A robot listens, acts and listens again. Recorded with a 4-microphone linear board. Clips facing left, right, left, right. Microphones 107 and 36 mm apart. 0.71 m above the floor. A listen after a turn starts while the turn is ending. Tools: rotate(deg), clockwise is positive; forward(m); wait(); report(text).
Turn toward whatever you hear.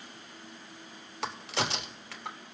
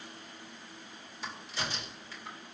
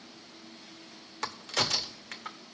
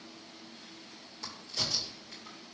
rotate(-70)
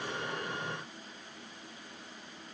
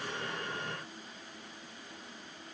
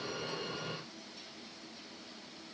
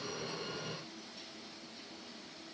wait()
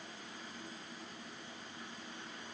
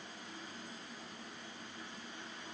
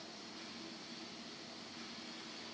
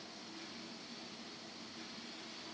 report("I heard a crack, but can't make it out now. It was about straight ahead or 40° left.")